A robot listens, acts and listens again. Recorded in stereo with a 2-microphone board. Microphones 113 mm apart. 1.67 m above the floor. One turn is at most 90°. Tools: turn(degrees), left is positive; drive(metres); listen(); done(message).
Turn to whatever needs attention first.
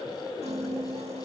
listen()
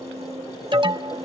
turn(degrees=-45)
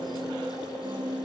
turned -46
listen()
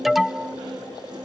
done("Found it: an alarm, straight ahead.")